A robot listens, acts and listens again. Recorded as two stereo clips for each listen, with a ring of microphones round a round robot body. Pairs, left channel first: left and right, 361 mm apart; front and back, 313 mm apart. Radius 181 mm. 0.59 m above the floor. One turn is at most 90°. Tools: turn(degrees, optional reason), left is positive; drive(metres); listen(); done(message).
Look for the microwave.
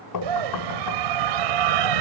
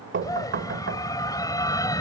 listen()
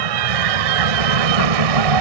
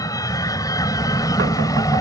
listen()
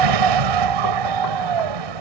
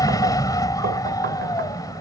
done("I can't make out a microwave, only a scream and knocking.")